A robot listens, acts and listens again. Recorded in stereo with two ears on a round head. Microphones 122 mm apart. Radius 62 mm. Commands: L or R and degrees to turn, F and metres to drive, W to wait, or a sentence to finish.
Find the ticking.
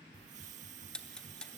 L30
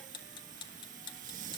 L140
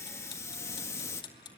L35
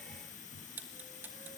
R15
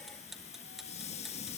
Facing the ticking.